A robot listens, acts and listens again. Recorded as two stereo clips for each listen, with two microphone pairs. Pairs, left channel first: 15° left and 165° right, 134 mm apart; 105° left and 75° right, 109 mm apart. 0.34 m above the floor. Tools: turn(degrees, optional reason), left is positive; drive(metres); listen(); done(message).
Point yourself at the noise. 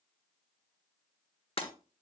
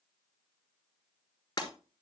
turn(degrees=60, reason="The breaking glass: 60° left.")
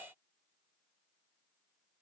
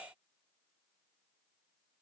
done("I heard breaking glass from this way, but can't make it out now.")